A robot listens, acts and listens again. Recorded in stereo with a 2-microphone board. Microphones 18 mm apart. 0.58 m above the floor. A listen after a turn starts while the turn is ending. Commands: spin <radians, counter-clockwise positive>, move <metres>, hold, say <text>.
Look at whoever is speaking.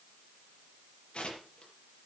hold
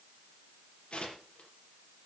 hold
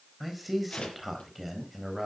spin -0.52
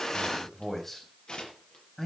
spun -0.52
spin 0.17
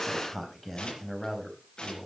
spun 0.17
say Facing the man speaking.